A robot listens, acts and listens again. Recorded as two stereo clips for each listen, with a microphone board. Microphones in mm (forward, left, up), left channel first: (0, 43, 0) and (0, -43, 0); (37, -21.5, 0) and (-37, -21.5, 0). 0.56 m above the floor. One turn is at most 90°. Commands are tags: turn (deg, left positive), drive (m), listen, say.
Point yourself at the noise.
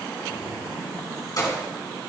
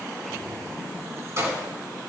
<turn deg="90"/>
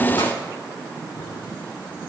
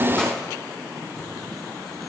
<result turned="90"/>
<turn deg="45"/>
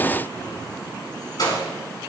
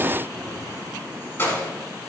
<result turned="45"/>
<turn deg="60"/>
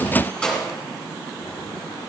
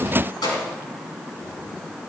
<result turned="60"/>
<turn deg="15"/>
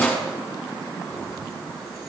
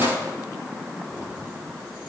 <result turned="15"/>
<say>Found it: keys jangling, straight ahead, over 4 m away.</say>